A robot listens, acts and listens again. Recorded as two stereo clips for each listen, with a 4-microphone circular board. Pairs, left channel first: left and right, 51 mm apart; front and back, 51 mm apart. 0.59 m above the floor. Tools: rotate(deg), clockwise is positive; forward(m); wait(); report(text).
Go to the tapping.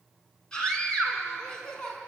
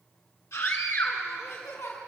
wait()
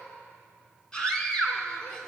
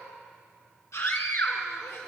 wait()
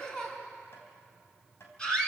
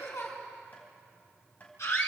rotate(-55)
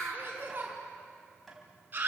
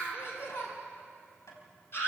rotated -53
forward(1.0)
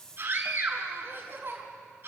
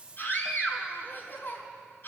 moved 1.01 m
wait()
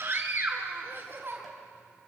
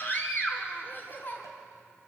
wait()
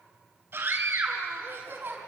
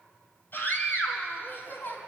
report("Facing where the tapping came from. I can't hear it now. I did not reach it.")